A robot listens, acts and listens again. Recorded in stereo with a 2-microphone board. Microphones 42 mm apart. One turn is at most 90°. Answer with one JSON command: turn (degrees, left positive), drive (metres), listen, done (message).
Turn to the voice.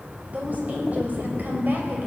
{"turn": -50}
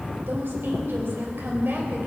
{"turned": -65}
{"turn": -50}
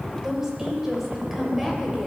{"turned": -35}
{"done": "Facing the woman speaking, 2 to 4 m away."}